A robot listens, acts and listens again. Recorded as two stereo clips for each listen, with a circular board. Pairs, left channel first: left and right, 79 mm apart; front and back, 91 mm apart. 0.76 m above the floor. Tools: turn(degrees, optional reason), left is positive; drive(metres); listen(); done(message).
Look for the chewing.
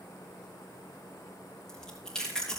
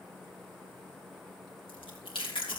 turn(degrees=10, reason="The chewing: 10° left.")
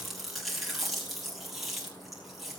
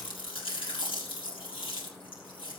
done("Facing the chewing.")